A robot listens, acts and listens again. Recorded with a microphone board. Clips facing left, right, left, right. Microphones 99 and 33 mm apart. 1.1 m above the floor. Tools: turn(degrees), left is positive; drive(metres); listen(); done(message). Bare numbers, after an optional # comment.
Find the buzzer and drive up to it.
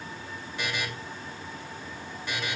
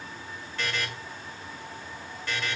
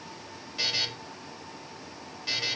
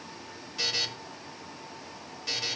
turn(30)
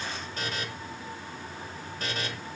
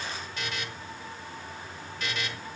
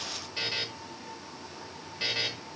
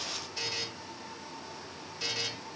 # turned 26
# So it is at 140° left.
turn(140)
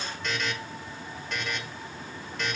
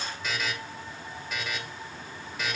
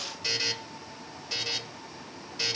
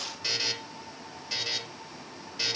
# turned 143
drive(1.0)
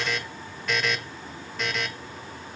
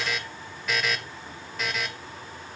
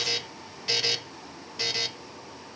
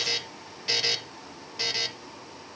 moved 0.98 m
drive(1.0)
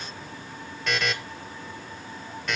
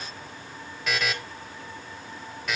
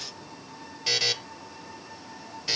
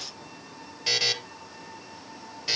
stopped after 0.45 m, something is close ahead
done("Arrived at the buzzer, straight ahead.")